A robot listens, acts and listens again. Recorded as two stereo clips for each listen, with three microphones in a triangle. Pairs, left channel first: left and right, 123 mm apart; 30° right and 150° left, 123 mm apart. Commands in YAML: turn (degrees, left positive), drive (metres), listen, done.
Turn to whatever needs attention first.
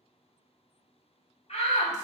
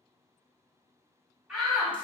turn: 65
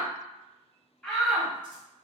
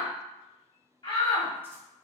done: "Facing the shout."